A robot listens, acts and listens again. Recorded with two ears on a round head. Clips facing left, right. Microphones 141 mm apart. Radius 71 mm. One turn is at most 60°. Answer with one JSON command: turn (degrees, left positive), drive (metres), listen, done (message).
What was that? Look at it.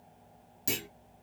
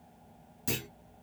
{"turn": 20}
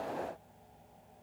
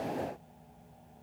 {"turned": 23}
{"listen": true}
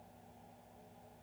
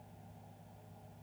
{"done": "I heard a clunk, but can't make it out now. It was about 5° right or 140° left."}